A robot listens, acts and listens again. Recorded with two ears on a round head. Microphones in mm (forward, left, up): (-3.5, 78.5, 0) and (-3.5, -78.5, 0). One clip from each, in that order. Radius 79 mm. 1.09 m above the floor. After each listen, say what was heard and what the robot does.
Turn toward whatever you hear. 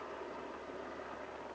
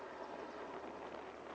Keep listening.
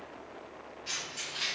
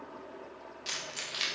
Turn 90° right.
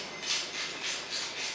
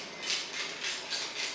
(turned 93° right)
So it is at 25° right. Turn 25° right.
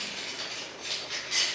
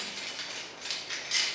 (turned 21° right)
The keys jangling is now 25° right. Turn 25° right.
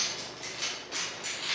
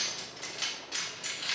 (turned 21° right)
The keys jangling is now 10° right. Turn 10° right.
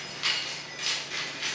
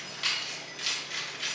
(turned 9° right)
Found it: keys jangling, straight ahead, 1 to 2 m away.